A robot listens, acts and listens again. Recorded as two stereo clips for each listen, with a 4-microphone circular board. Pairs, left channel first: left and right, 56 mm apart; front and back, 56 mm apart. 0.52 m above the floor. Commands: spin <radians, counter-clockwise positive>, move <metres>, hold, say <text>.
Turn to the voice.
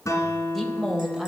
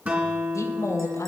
say Facing the woman speaking.